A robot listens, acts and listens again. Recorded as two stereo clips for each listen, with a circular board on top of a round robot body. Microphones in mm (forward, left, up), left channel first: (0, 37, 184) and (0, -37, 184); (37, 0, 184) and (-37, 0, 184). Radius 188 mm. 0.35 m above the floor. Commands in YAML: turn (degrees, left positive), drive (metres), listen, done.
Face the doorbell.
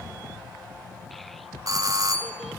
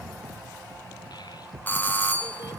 turn: -60
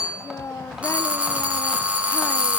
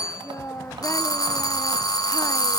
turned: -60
turn: -20
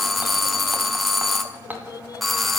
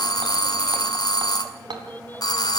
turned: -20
done: "Facing the doorbell."